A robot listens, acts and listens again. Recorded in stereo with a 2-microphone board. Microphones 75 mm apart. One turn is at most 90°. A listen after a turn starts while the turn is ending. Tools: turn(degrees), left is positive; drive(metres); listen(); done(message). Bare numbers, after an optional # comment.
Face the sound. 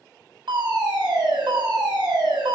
# The fire alarm: about 75° right or 105° right.
turn(-75)
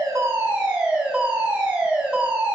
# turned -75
# So it is at 20° right.
turn(-20)
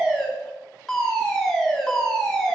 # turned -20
done("Facing the fire alarm.")